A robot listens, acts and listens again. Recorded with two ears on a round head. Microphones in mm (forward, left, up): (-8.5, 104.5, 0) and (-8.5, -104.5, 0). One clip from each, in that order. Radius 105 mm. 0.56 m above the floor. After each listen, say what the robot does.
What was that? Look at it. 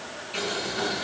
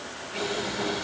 Turn 65° left.
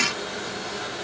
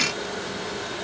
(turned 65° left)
Facing the boiling.